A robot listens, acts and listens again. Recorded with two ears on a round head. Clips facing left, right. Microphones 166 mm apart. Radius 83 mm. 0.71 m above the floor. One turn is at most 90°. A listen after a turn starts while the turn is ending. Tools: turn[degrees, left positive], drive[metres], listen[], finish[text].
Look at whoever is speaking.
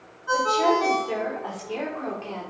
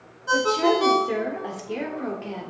Action: turn[-30]
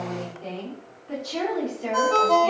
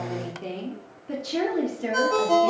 Thought: The woman speaking: about 20° right or 160° right.
Action: turn[-20]
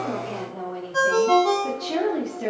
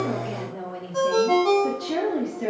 Action: turn[30]
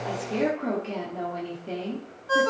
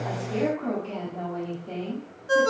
Thought: So it is at 150° left.
Action: turn[90]
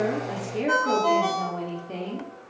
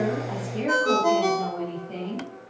Thought: The woman speaking is now 25° left.
Action: turn[25]
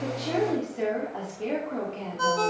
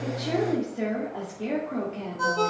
Action: finish[Found it: a woman speaking, straight ahead, 1 to 2 m away.]